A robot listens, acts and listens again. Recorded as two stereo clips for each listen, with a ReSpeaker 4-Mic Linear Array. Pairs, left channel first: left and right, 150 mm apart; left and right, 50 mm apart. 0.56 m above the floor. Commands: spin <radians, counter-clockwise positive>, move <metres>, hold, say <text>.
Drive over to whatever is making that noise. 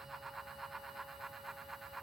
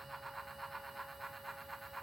hold
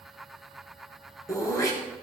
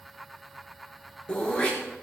spin 0.35
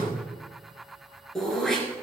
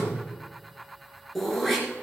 move 1.0
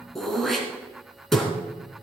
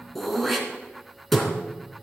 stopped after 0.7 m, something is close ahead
say Something is in my way. I am facing the throat clearing but have not reached it.